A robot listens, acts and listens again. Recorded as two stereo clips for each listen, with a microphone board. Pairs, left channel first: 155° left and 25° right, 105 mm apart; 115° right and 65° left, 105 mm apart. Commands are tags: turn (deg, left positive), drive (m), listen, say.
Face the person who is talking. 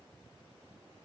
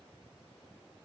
<listen/>
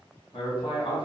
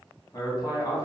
<turn deg="-165"/>
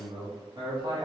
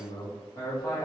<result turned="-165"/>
<turn deg="-60"/>
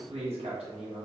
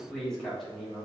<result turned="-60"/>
<turn deg="-25"/>
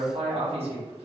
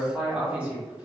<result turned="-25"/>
<turn deg="-10"/>
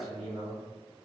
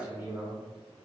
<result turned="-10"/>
<say>Found it: a man speaking, straight ahead, 1 to 2 m away.</say>